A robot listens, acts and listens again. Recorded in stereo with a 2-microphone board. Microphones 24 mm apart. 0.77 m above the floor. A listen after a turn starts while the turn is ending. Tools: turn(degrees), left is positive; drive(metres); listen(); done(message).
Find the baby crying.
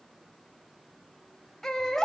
turn(degrees=30)
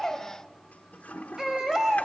turn(degrees=-15)
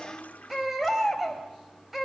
done("Found it: a baby crying, straight ahead.")